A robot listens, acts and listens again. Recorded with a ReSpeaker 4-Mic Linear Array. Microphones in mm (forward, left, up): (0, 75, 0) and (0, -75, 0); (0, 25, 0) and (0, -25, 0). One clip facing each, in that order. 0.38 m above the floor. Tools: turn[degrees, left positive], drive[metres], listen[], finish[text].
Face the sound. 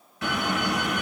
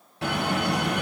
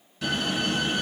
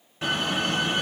Thought: The door slam: about 30° right or 150° right.
Action: turn[-30]
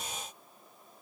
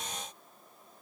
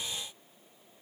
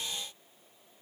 Action: listen[]
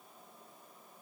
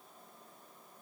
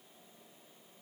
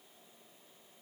Action: finish[I heard a door slam, but can't make it out now. It was about straight ahead or 120° right.]